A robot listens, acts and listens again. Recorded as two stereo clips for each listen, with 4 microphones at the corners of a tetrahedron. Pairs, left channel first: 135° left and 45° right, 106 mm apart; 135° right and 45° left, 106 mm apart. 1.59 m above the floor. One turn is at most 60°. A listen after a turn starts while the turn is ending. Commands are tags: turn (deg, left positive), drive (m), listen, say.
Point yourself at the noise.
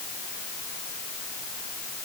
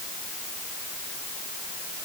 <listen/>
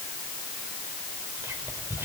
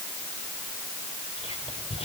<turn deg="-60"/>
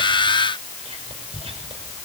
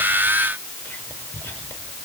<turn deg="-60"/>
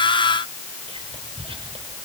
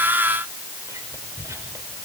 <turn deg="-20"/>
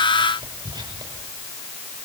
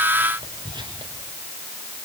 <say>Facing the whispering.</say>